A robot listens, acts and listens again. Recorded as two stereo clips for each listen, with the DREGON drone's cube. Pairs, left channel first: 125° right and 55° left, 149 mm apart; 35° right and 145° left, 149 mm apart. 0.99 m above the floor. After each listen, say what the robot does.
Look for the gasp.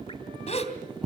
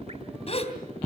Turn 80° right.
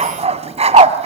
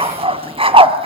I heard a gasp from this way, but can't make it out now.